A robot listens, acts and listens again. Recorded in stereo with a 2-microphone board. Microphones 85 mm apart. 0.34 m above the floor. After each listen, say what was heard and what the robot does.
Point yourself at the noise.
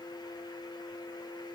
Keep listening.
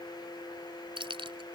The keys jangling: about 70° right or 110° right. Turn 70° right.
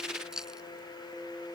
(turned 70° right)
Found it: keys jangling, straight ahead.